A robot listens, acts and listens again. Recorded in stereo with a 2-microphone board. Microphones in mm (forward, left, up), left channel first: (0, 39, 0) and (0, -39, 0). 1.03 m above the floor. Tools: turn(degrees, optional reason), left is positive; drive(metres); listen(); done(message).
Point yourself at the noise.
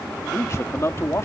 turn(degrees=35, reason="The man speaking: about 35° left or 145° left.")
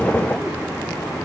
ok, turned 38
listen()
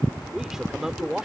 done("Found it: a man speaking, straight ahead.")